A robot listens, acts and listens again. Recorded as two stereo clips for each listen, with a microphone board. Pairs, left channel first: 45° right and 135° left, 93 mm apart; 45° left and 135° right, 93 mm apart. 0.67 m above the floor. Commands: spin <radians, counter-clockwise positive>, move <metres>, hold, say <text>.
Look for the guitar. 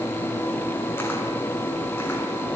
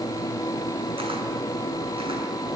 hold
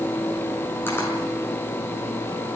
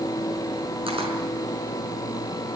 hold
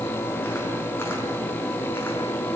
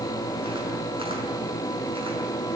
say I can't make out a guitar to turn to.